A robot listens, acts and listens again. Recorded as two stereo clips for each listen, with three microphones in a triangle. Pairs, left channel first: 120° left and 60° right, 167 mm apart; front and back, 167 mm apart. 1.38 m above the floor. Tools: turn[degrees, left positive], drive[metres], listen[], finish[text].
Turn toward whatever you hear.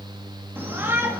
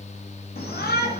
Thought: The shout: 15° left.
Action: turn[15]
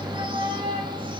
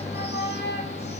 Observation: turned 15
Action: finish[Found it: a shout, straight ahead.]